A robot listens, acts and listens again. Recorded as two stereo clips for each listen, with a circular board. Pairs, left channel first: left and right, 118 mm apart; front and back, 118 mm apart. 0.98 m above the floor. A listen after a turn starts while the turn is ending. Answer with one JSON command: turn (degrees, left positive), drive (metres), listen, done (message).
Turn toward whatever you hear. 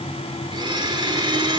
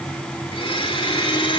{"turn": -40}
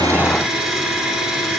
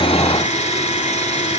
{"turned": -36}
{"done": "Facing the blender, 2 to 4 m away."}